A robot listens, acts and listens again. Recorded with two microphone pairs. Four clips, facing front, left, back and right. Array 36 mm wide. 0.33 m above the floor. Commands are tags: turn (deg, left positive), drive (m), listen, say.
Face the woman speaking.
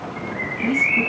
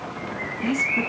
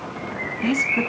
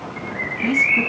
<turn deg="-160"/>
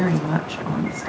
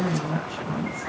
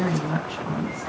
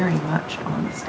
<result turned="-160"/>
<turn deg="-65"/>
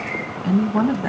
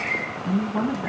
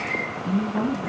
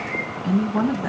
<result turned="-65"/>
<say>Found it: a woman speaking, straight ahead, 2 to 4 m away.</say>